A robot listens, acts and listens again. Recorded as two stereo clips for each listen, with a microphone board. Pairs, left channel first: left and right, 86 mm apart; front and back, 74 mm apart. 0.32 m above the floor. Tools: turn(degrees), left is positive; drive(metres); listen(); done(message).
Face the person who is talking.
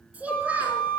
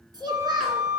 turn(degrees=-165)
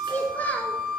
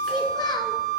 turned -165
turn(degrees=20)
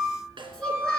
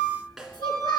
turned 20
listen()
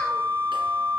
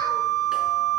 listen()
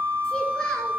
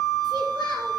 done("Facing where the child speaking came from. I can't hear it now.")